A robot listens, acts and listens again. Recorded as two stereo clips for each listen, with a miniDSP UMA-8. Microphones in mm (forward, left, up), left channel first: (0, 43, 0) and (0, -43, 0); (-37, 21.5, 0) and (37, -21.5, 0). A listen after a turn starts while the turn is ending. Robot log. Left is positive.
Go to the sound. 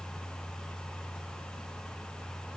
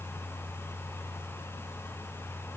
cmd idle
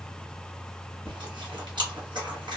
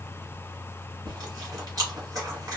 note: The chewing: 70° right.
cmd yaw -70
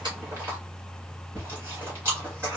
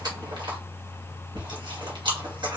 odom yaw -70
note: The chewing is now 30° right.
cmd yaw -30
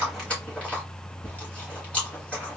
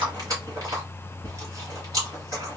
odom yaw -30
note: The chewing is now 15° left.
cmd yaw +15
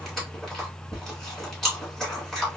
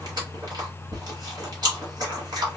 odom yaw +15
cmd fwd 1.0
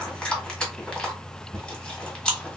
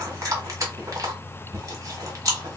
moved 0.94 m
note: The chewing is now 10° left.
cmd yaw +10
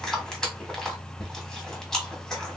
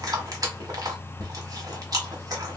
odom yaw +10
note: The chewing is now 10° left.
cmd yaw +10
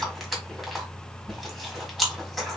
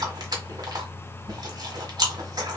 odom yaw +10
cmd fwd 1.0
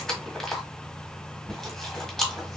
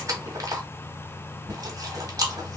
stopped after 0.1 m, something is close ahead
end: I am next to the chewing.